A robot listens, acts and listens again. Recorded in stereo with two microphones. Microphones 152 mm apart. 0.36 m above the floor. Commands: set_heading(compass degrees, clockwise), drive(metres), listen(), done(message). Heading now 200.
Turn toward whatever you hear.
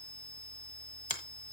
set_heading(150)
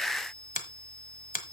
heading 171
set_heading(81)
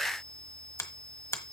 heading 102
set_heading(82)
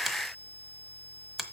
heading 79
done("Facing the finger snap, 1 to 2 m away.")